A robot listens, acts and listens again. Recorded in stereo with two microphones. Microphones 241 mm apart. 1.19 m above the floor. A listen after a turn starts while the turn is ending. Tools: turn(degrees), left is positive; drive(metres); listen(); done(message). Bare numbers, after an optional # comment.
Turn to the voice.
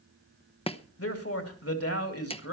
# The man speaking: about 75° left or 105° left.
turn(75)
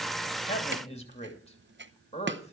# So it is at 25° left.
turn(25)
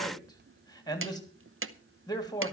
# The man speaking is now 15° left.
turn(15)
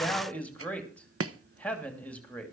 done("Found it: a man speaking, straight ahead, 2 to 4 m away.")